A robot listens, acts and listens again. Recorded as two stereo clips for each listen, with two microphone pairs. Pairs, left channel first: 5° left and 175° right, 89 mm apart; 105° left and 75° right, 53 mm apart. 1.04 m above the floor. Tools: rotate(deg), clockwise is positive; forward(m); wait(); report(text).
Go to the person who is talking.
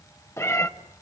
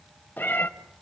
wait()
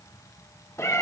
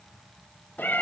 wait()
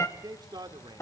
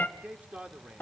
rotate(140)
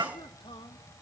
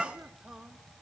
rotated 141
wait()
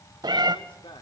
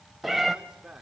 forward(1.0)
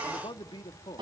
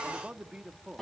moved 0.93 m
forward(1.0)
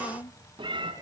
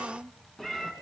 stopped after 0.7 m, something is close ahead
report("Arrived at the man speaking, straight ahead.")